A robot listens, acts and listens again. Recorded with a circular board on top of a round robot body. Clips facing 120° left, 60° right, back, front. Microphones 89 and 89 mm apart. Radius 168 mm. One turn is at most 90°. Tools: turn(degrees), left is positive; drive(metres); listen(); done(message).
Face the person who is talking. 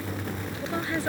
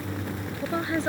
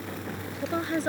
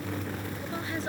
turn(degrees=-90)
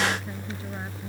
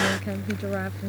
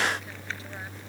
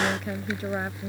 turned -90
turn(degrees=-40)
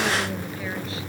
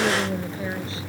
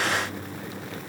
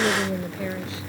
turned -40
listen()
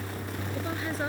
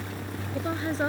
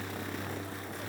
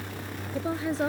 done("Facing the woman speaking.")